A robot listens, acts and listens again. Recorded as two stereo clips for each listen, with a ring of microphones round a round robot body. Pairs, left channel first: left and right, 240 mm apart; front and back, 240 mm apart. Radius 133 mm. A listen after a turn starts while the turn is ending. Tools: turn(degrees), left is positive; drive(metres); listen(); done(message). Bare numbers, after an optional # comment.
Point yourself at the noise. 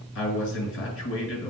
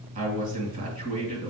# The man speaking: 125° left.
turn(125)
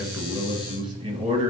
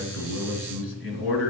# The man speaking is now 20° right.
turn(-20)
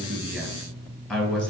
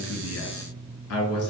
done("Facing the man speaking, 1 to 2 m away.")